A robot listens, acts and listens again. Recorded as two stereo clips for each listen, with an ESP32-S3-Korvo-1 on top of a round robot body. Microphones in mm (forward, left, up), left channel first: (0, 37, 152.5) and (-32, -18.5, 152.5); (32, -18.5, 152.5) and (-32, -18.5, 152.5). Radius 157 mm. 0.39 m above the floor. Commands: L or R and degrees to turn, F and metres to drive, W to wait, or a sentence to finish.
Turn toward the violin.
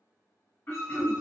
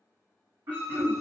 R70
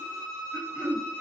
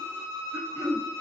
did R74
Found it: a violin, straight ahead, 1 to 2 m away.